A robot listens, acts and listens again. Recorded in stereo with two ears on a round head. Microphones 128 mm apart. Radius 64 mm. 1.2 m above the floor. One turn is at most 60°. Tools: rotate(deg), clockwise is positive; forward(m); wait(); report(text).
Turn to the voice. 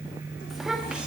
rotate(30)
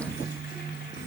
rotate(60)
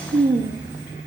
rotate(25)
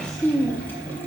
rotate(-10)
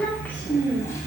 rotate(-15)
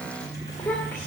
rotate(-15)
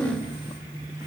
rotate(-10)
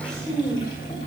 report("Found it: a child speaking, straight ahead, 2 to 4 m away.")